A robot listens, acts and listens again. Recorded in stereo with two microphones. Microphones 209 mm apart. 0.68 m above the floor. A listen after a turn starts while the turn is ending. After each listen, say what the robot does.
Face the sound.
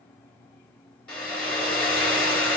Turn 30° left.
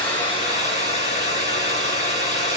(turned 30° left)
Turn 145° left.
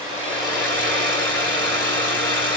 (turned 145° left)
Turn 10° left.
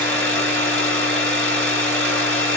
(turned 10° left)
Facing the hair dryer, 2 to 4 m away.